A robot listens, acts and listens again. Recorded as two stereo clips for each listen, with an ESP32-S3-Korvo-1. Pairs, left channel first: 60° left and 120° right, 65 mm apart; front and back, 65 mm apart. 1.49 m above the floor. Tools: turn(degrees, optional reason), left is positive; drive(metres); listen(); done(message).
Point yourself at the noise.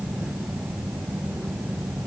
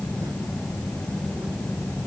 listen()
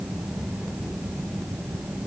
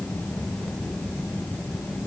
listen()
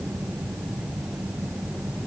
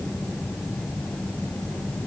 done("I can't make out anything to turn to.")